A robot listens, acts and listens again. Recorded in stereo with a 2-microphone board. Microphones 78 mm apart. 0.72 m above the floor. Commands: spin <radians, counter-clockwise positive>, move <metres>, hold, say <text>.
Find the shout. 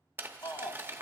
spin 1.05
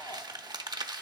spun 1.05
hold
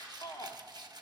spin 0.96
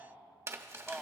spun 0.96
say Facing the shout, 1 to 2 m away.